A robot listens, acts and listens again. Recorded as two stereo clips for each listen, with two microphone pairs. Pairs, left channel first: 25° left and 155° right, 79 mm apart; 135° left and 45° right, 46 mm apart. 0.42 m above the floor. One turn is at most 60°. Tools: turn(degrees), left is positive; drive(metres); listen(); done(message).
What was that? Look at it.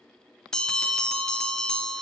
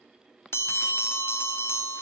turn(degrees=60)
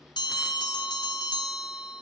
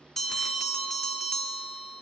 turn(degrees=50)
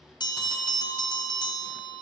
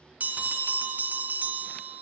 done("Facing the bell, under 1 m away.")